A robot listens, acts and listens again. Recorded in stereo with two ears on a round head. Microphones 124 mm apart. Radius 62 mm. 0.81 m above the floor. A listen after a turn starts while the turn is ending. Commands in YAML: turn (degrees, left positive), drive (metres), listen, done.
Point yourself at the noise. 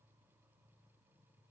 listen: true
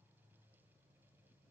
listen: true
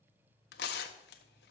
turn: 90
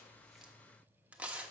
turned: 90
turn: -10
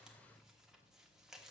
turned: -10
done: "Found it: tearing paper, straight ahead, 1 to 2 m away."